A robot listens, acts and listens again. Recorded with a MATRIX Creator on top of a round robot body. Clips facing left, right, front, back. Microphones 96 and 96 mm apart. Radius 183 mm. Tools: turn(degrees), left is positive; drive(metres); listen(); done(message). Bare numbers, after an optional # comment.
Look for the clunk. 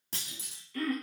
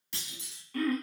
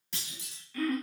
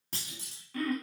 # The clunk: 135° left.
turn(135)
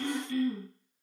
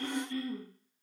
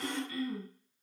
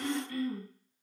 done("Facing where the clunk came from. I can't hear it now.")